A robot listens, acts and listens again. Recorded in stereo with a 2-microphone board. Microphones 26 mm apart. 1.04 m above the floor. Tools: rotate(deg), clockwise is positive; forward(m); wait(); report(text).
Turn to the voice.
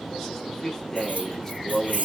rotate(-30)
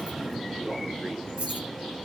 wait()
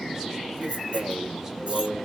wait()
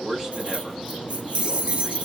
rotate(15)
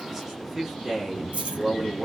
rotate(10)
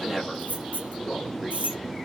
report("Found it: a man speaking, straight ahead.")